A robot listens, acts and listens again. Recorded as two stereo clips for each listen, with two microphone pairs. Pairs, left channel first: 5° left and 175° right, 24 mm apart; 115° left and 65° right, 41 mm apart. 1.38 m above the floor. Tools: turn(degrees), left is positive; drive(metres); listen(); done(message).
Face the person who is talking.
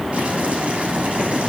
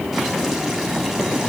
listen()
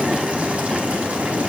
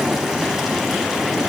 listen()
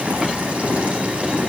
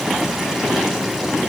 done("I can't make out anyone speaking to turn to.")